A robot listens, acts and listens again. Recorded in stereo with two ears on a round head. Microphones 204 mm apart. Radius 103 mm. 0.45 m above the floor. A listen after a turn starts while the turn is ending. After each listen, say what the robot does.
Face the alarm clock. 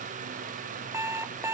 Turn 30° right.
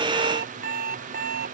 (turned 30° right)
Turn 140° right.
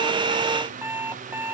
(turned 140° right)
Turn 10° right.
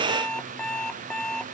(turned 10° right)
Facing the alarm clock.